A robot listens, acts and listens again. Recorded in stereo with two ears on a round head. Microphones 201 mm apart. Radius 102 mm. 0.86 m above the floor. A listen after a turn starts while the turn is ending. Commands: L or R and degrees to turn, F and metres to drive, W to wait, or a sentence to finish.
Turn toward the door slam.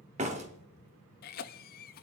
R30
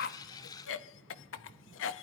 W
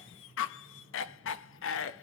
I heard a door slam, but can't make it out now. It was about straight ahead or 120° right.